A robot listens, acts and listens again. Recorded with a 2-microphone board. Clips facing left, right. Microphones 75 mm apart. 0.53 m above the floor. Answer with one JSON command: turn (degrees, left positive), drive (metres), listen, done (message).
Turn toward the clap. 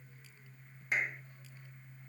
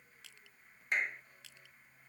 {"turn": 30}
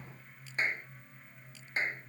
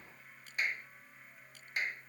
{"turn": 150}
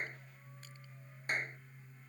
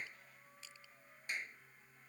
{"turn": 50}
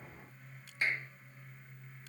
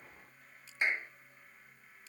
{"turn": -20}
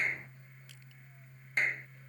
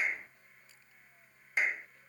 {"done": "Found it: a clap, straight ahead."}